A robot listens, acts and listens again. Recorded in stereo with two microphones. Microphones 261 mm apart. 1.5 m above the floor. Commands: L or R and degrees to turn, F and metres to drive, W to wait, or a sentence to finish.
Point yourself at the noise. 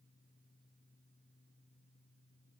W
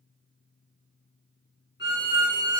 L40
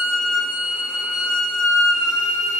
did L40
L95
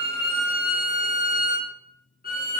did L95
L35
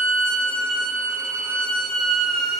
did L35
Facing the violin, 1 to 2 m away.